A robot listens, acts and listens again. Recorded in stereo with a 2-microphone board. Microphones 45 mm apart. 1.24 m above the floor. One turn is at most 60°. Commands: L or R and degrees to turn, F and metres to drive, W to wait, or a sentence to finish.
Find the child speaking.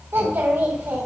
R60
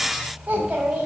R40
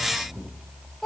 Facing the child speaking.